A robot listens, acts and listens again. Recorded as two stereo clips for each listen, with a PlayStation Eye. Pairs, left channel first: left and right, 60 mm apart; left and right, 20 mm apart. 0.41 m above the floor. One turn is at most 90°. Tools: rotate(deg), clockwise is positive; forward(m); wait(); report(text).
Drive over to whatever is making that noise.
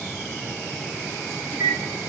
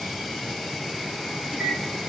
rotate(-15)
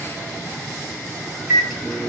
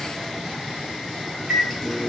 forward(1.0)
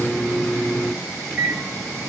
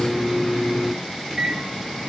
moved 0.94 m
forward(1.0)
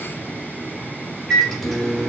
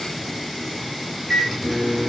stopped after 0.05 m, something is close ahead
report("I am next to the microwave.")